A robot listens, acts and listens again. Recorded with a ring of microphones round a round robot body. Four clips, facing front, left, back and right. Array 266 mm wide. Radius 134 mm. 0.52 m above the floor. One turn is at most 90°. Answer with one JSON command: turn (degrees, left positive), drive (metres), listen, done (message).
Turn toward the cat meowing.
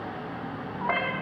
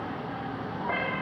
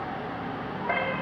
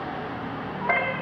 {"turn": -40}
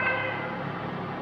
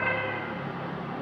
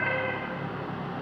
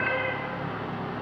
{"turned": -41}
{"done": "Facing the cat meowing."}